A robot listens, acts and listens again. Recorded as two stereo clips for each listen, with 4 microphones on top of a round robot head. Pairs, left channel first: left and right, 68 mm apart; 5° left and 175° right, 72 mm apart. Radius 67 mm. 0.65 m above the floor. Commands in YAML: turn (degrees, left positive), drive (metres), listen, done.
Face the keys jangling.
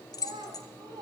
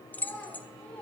turn: 70
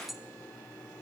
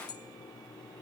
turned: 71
done: "Found it: keys jangling, straight ahead."